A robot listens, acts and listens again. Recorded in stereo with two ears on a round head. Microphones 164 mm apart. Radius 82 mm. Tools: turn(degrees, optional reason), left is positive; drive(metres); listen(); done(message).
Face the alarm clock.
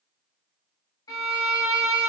listen()
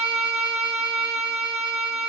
listen()
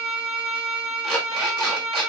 turn(degrees=30)
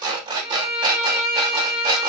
turn(degrees=-30, reason="So it is at 30° right.")
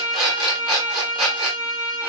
done("Found it: an alarm clock, straight ahead, 1 to 2 m away.")